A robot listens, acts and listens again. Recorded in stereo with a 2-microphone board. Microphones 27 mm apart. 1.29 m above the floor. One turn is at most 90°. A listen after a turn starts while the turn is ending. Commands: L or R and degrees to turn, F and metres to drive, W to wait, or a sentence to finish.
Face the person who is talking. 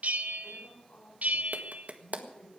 L90
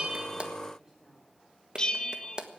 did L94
W
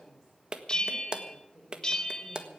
R20
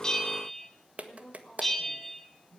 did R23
Found it: a woman speaking, straight ahead, over 4 m away.